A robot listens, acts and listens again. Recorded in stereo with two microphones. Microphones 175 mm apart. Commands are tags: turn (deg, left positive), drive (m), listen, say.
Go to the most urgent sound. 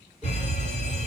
<turn deg="40"/>
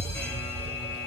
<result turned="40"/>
<turn deg="15"/>
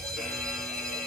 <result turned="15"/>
<drive m="1.0"/>
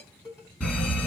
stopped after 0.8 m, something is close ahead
<say>Arrived at the fire alarm, straight ahead.</say>